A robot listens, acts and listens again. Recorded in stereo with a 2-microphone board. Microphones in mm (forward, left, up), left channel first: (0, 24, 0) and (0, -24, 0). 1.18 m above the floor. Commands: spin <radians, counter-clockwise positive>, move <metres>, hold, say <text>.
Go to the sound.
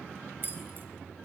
spin -0.79
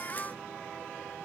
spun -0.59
hold
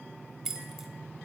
spin -0.17
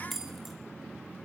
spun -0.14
move 1.0
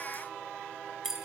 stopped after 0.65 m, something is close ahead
spin -0.17
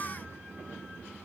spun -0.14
hold
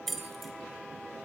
say Blocked. The keys jangling is further on, straight ahead.